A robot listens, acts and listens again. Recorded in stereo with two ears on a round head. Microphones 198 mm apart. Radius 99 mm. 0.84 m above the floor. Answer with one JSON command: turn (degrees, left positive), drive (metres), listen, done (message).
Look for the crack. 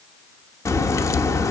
{"turn": 30}
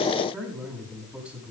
{"listen": true}
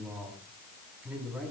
{"done": "I heard a crack, but can't make it out now. It was about 15° right or 135° left."}